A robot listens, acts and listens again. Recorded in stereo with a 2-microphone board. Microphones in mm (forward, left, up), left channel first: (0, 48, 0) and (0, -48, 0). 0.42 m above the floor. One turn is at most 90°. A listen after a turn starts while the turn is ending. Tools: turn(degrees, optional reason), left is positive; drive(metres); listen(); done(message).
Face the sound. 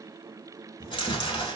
turn(degrees=55, reason="The chewing: about 55° left or 125° left.")
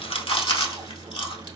turn(degrees=65, reason="So it is at 65° left.")
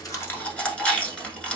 turn(degrees=10, reason="The chewing is now 10° left.")
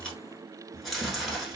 done("Found it: chewing, straight ahead.")